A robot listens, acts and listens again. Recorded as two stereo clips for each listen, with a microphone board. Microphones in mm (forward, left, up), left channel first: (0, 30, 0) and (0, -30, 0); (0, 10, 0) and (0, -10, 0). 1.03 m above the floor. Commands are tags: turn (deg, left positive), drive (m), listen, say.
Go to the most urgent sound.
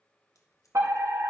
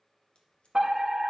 <turn deg="-55"/>
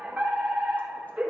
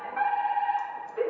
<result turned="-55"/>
<turn deg="-15"/>
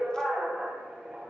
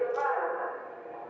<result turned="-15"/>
<drive m="1.0"/>
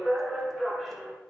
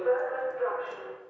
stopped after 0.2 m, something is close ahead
<turn deg="10"/>
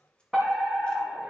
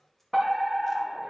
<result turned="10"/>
<say>Something is in my way. I am facing the fire alarm but have not reached it.</say>